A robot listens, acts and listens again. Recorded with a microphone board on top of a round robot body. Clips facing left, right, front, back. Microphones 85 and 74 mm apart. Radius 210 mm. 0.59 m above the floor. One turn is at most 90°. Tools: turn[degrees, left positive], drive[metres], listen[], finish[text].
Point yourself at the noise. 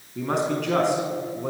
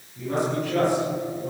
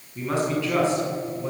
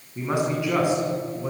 Thought: The man speaking: 105° left.
Action: turn[90]
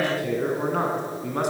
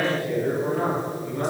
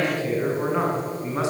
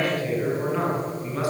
Thought: The man speaking is now 65° left.
Action: turn[65]
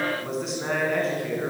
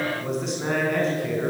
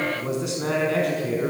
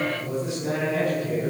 Action: finish[Found it: a man speaking, straight ahead.]